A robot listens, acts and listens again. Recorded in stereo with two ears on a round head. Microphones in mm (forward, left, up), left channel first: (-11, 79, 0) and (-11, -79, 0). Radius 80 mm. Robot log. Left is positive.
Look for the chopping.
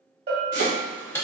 cmd yaw -90
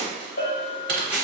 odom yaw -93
note: So it is at 15° left.
cmd yaw +15
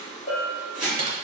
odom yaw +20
end: Facing the chopping.